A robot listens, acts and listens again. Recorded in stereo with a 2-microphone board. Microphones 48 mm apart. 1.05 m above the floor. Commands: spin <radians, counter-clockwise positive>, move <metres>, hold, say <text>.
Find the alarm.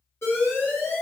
spin 1.31
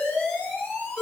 spin 0.52
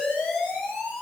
spin 0.35
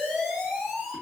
say Found it: an alarm, straight ahead.